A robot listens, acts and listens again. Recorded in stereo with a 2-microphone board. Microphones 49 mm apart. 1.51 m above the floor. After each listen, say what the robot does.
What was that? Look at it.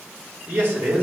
Turn 45° right.
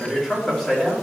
Facing the man speaking, 2 to 4 m away.